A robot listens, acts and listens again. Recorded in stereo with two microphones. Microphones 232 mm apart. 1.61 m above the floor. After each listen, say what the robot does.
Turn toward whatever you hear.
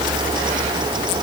Keep listening.
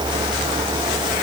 Keep listening.
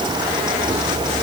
I can't make out anything to turn to.